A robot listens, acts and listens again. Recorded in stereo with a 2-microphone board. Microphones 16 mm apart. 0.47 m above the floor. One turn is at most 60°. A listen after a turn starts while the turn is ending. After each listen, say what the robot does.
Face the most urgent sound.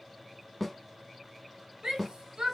Turn 60° right.
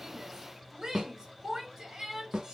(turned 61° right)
Turn 50° right.
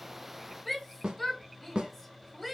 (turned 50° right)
Facing the shout, 1 to 2 m away.